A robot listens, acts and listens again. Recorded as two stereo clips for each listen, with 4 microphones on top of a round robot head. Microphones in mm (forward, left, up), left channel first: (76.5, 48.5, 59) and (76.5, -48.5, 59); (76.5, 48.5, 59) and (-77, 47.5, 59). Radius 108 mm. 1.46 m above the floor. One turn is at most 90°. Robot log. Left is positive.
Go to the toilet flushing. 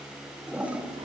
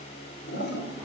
note: The toilet flushing: 15° right.
cmd yaw -15
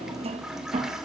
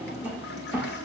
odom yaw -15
cmd fwd 1.0
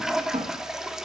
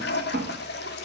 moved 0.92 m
cmd fwd 1.0
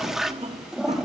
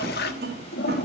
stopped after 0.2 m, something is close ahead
end: I am next to the toilet flushing.